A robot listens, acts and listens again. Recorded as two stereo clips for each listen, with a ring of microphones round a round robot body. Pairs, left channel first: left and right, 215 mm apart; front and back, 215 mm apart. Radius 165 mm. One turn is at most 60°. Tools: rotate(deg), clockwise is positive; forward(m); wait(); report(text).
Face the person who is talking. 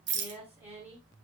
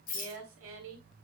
rotate(60)
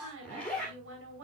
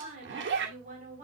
rotate(60)
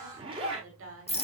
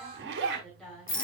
rotate(60)
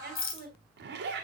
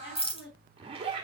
rotate(50)
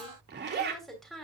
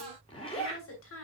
report("Facing the woman speaking, 2 to 4 m away.")